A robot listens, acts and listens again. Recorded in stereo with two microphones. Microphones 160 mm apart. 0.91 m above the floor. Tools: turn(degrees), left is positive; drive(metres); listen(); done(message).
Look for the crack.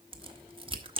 turn(degrees=-35)
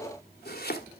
listen()
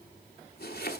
done("I heard a crack, but can't make it out now. It was about straight ahead or 110° right.")